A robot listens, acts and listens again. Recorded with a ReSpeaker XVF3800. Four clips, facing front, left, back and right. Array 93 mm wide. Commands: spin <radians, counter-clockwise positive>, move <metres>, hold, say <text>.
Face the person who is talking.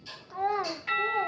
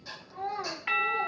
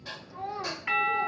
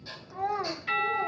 spin -0.35
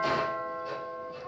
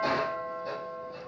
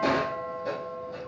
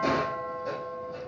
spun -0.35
hold
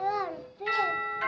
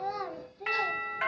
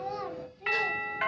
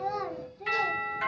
say Found it: a child speaking, straight ahead.